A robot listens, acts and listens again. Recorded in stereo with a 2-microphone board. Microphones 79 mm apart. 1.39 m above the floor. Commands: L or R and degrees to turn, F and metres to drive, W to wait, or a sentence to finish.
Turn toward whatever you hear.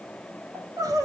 R50
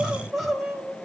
Found it: crying, straight ahead.